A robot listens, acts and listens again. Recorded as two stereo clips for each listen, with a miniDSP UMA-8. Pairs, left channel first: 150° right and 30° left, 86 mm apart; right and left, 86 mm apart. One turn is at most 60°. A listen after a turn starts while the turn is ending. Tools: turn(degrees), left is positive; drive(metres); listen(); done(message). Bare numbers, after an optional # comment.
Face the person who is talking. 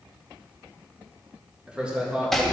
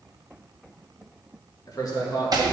# The man speaking: 50° right.
turn(-50)
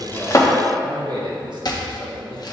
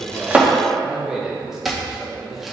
done("Facing the man speaking, 1 to 2 m away.")